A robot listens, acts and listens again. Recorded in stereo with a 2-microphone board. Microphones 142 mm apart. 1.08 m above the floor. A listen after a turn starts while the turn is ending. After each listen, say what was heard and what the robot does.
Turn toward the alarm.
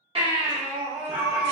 The alarm: about 70° right or 110° right. Turn 70° right.
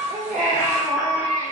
So it is at 10° right. Turn 10° right.
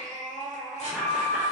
Facing the alarm, under 1 m away.